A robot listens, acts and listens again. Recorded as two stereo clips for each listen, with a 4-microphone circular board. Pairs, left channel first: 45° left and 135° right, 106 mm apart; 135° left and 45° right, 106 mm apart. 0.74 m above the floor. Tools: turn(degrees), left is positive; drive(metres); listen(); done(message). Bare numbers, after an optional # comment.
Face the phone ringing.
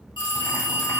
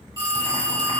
done("Facing the phone ringing, 1 to 2 m away.")